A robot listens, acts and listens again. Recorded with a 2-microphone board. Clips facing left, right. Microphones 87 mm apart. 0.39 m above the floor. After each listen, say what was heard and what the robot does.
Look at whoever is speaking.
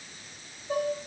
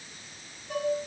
Keep listening.
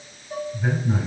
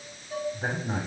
The man speaking: about 55° right or 125° right. Turn 55° right.
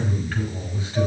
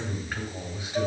So it is at 15° right. Turn 15° right.
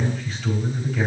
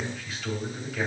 Found it: a man speaking, straight ahead, 2 to 4 m away.